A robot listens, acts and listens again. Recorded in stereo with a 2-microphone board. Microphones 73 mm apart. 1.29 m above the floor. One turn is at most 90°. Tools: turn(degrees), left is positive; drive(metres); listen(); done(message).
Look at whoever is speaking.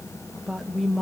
turn(degrees=30)
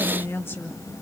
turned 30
turn(degrees=90)
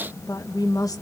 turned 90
turn(degrees=60)
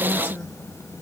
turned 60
turn(degrees=25)
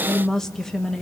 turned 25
done("Found it: a woman speaking, straight ahead, 1 to 2 m away.")